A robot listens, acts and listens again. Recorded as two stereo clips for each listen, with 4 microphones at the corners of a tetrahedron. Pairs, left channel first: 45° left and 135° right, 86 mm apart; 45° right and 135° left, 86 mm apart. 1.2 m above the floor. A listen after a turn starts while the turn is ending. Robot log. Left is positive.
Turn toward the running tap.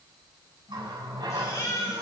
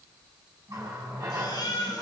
note: The running tap: 175° right.
cmd yaw -175
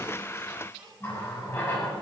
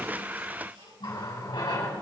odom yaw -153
note: The running tap is now 20° right.
cmd yaw -20
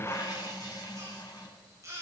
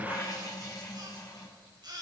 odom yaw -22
end: Facing the running tap.